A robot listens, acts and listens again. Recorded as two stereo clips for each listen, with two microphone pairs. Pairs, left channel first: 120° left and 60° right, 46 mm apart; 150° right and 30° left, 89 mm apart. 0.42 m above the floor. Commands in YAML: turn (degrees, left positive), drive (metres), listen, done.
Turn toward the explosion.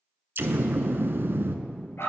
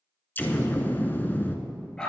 turn: -85
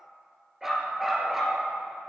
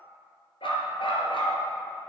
done: "I heard an explosion from this way, but can't make it out now."